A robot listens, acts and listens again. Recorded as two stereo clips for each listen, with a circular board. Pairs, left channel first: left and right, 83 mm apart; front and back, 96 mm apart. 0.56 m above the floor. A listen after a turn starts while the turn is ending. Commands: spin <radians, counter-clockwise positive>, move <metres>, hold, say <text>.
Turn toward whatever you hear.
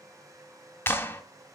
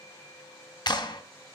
spin 0.52
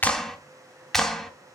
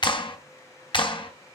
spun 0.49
say Facing the clap.